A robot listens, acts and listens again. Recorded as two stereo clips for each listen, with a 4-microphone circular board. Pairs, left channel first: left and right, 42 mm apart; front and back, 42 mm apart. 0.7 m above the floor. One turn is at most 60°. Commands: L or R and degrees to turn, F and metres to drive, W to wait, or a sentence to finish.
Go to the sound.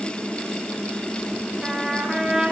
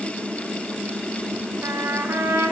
R60
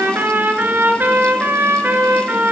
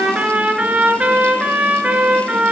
R60
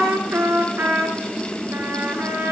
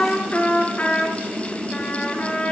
R55
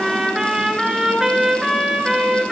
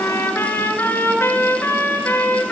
F1.0
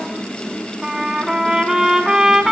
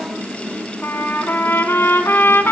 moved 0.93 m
R15
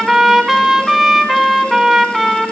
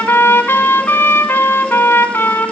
F1.0
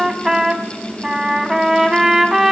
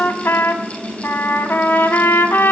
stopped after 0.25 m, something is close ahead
R10
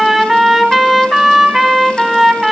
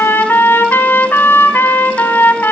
Arrived at the trumpet, straight ahead.